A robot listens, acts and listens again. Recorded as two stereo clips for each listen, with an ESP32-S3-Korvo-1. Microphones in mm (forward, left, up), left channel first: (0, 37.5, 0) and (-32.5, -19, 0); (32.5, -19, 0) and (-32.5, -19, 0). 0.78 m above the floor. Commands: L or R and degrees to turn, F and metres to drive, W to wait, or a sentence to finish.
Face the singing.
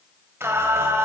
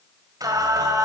R165
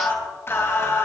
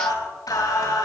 L15
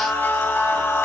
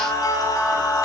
L10
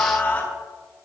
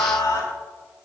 Found it: singing, straight ahead, over 4 m away.